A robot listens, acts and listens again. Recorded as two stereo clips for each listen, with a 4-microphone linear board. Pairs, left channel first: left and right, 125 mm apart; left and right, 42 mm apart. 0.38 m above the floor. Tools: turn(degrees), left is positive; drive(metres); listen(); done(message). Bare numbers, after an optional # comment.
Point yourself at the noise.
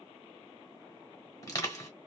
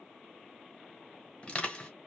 # The crushing: about 25° left or 155° left.
turn(25)
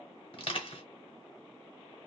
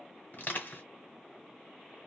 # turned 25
# So it is at 120° left.
turn(120)
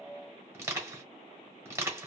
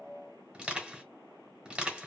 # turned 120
# The crushing is now 25° right.
turn(-25)
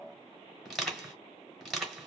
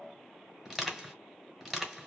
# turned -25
done("Found it: crushing, straight ahead.")